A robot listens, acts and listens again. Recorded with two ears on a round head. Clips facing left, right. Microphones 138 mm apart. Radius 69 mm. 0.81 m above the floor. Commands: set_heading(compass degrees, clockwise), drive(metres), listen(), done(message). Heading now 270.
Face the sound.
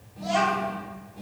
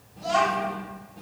set_heading(240)
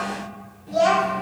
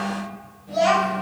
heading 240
set_heading(120)
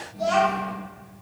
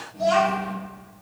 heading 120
done("Found it: a child speaking, straight ahead, 1 to 2 m away.")